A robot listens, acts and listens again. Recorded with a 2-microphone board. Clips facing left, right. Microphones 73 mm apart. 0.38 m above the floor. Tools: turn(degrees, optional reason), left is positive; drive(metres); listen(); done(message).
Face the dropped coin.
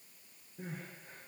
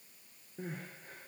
listen()
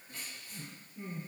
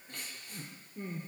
listen()
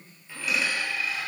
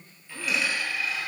turn(degrees=30)
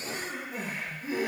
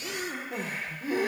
listen()
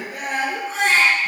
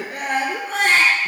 done("I heard a dropped coin, but can't make it out now. It was about 25° right or 145° left.")